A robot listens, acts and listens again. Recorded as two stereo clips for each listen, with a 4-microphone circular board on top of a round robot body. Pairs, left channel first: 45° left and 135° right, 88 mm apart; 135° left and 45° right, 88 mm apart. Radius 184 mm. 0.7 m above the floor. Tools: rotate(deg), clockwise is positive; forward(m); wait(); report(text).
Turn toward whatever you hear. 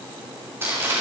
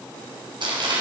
rotate(70)
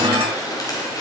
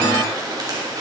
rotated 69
report("Facing the crumpling.")